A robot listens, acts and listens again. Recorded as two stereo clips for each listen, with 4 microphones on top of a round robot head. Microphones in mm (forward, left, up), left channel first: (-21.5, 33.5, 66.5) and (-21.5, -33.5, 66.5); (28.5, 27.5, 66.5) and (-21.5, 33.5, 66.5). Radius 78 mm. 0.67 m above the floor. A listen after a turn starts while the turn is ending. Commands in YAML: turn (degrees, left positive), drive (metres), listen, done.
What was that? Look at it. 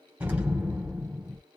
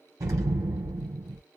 turn: -155
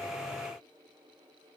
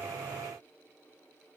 done: "I heard an explosion from this way, but can't make it out now."